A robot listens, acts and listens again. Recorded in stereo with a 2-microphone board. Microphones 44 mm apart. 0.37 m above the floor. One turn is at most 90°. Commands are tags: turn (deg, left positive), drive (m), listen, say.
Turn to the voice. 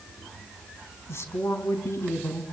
<turn deg="70"/>
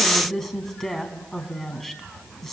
<say>Facing the woman speaking.</say>